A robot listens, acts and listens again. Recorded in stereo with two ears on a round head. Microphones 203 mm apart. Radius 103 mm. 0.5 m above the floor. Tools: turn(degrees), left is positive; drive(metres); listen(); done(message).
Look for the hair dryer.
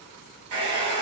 turn(degrees=-90)
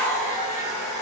turn(degrees=-10)
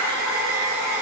done("Facing the hair dryer.")